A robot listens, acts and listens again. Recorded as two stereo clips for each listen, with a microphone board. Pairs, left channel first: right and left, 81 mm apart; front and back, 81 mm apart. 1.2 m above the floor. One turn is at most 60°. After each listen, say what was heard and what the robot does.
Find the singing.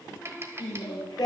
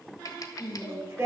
The singing: 125° right. Turn 60° right.
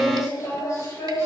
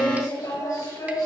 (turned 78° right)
The singing is now 40° right. Turn 40° right.
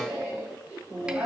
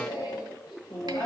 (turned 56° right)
The singing is now 20° left. Turn 20° left.
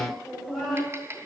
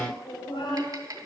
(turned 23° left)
Found it: singing, straight ahead, over 4 m away.